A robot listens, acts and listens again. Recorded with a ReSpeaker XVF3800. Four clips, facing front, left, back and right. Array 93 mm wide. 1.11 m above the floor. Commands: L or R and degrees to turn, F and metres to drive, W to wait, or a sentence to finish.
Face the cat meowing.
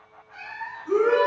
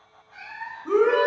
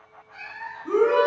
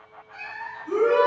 R70
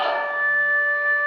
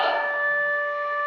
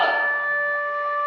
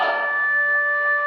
W
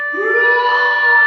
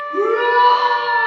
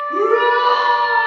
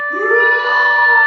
W
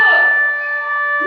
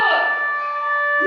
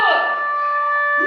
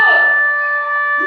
I heard a cat meowing from this way, but can't make it out now.